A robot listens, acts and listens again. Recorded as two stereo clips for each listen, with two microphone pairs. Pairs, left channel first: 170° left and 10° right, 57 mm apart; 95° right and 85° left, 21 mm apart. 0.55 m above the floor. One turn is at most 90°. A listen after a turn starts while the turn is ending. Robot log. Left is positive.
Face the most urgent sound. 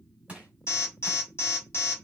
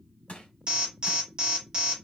note: The alarm: 135° left.
cmd yaw +90
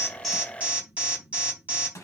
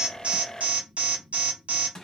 note: The alarm is now 60° left.
cmd yaw +60
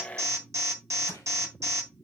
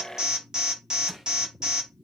note: The alarm is now 25° left.
cmd yaw +25
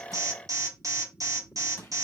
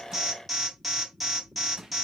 end: Facing the alarm.